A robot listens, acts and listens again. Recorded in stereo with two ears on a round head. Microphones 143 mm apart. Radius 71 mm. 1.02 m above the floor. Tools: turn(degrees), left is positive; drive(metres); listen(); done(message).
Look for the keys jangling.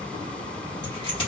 turn(degrees=35)
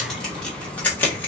turn(degrees=15)
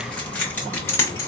turn(degrees=20)
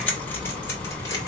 turn(degrees=20)
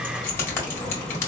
turn(degrees=15)
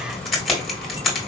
done("Found it: keys jangling, straight ahead, 1 to 2 m away.")